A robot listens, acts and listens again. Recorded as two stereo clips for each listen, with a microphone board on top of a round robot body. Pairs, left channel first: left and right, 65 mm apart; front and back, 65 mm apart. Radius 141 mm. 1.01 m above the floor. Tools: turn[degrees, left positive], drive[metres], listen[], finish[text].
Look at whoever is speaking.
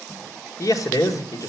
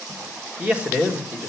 Thought: The man speaking: 110° left.
Action: turn[110]
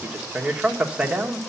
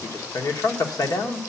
Thought: The man speaking is now 15° right.
Action: turn[-15]
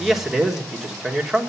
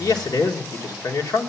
Action: finish[Facing the man speaking, 1 to 2 m away.]